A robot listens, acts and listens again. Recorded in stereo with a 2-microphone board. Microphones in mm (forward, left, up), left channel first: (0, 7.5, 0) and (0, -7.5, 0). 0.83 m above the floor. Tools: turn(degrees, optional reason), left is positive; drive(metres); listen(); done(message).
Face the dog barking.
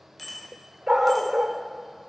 turn(degrees=-60, reason="The dog barking: about 60° right or 120° right.")
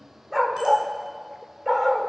done("Found it: a dog barking, straight ahead, 1 to 2 m away.")